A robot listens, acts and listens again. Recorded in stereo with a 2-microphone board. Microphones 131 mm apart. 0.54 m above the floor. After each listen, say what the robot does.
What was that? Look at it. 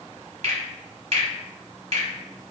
Turn 50° right.
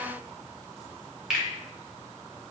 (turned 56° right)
Facing the finger snap.